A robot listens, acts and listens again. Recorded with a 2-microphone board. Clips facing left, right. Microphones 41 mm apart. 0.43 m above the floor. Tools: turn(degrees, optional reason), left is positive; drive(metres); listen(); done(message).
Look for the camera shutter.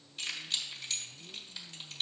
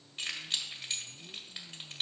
listen()
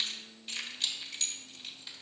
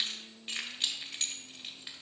listen()
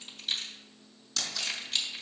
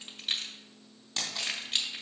turn(degrees=-40, reason="The camera shutter: about 40° right or 140° right.")
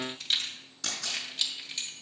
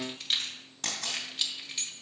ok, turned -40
turn(degrees=-95, reason="So it is at 95° right.")
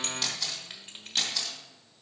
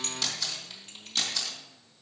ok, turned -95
turn(degrees=15, reason="The camera shutter is now 15° left.")
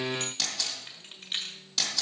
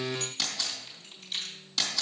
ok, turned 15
done("Facing the camera shutter, 2 to 4 m away.")